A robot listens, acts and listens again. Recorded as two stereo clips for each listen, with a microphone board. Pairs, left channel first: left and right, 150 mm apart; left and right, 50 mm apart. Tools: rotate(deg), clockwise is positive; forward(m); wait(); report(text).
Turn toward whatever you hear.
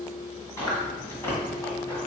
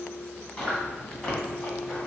rotate(-15)
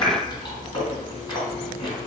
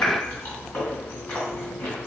rotate(-150)
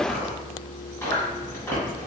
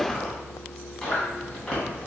rotate(-15)
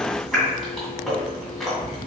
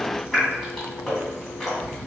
report("Found it: chewing, straight ahead, 1 to 2 m away.")